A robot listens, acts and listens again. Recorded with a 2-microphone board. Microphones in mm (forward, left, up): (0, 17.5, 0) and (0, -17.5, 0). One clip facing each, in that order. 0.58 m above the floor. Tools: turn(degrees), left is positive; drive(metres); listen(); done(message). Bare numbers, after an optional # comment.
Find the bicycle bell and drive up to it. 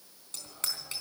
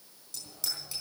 # The bicycle bell: about 55° left or 125° left.
turn(55)
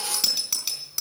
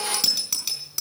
drive(1.0)
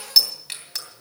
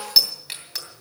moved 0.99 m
drive(1.0)
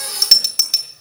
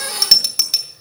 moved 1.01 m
drive(1.0)
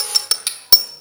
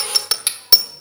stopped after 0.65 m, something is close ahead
# The bicycle bell is now 10° right.
turn(-10)
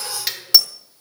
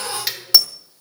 done("Arrived at the bicycle bell, straight ahead.")